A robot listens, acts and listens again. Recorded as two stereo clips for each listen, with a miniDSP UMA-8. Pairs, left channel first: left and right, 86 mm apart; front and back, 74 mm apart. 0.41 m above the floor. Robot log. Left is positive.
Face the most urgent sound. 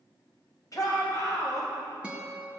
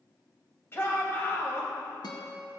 note: The shout: 50° left.
cmd yaw +50
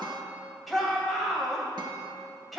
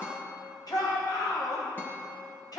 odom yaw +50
end: Found it: a shout, straight ahead.